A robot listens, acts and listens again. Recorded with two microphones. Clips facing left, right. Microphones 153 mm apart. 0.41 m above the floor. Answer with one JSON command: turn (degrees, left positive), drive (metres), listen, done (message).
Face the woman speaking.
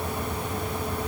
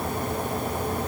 {"listen": true}
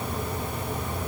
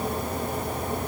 {"listen": true}
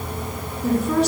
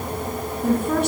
{"turn": -50}
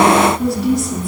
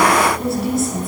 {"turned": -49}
{"done": "Facing the woman speaking, over 4 m away."}